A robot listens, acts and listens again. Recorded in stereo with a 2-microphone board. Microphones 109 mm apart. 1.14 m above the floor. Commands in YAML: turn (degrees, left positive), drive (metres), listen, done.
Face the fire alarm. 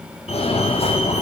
turn: 90
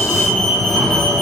done: "Found it: a fire alarm, straight ahead."